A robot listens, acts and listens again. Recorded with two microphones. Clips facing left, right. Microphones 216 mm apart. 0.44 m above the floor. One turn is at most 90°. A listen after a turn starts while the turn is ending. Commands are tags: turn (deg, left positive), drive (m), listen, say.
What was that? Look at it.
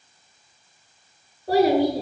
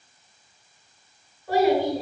<turn deg="35"/>
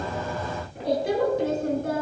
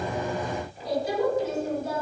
<turn deg="90"/>
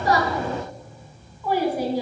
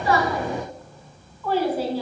<turn deg="15"/>
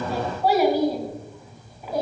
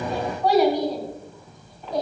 <say>Facing the child speaking, 2 to 4 m away.</say>